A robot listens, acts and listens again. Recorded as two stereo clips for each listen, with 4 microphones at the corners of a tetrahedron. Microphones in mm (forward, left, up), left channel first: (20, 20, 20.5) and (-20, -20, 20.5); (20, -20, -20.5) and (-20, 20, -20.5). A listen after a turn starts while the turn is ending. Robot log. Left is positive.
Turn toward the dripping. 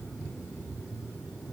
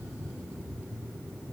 cmd idle
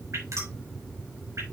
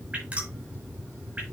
note: The dripping: 160° right.
cmd yaw -160
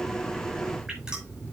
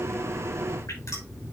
cmd idle
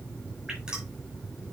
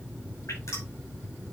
note: The dripping is now 60° right.
cmd yaw -60
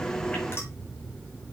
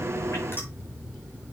cmd idle
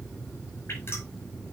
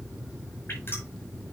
cmd idle
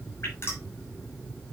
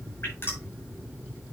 end: Facing the dripping, over 4 m away.